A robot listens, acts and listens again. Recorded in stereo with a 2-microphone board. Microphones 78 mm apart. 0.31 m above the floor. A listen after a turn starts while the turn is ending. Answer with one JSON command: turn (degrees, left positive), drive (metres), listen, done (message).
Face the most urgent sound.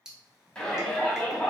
{"turn": 30}
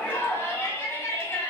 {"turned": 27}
{"turn": 140}
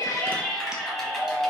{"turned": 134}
{"done": "Found it: a shout, straight ahead, 1 to 2 m away."}